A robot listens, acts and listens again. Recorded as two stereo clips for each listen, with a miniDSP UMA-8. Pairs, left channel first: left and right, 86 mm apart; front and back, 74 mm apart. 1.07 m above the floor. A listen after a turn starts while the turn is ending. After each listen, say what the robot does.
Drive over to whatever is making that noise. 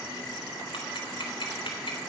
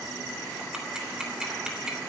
Turn 100° left.
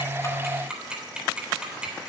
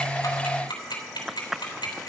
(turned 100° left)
Turn 10° right.
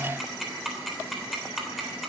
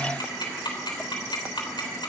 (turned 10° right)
Drive 1.0 m forward.
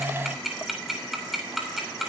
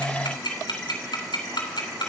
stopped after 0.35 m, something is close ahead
Blocked. The ticking is further on, straight ahead.